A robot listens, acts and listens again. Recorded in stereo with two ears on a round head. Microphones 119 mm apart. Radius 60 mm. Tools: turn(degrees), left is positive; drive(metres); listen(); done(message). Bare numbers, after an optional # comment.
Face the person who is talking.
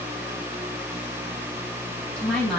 turn(30)
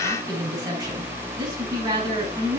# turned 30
# So it is at 25° right.
turn(-25)
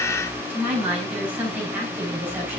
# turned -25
# The woman speaking is now 10° right.
turn(-10)
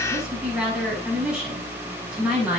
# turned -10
done("Found it: a woman speaking, straight ahead, over 4 m away.")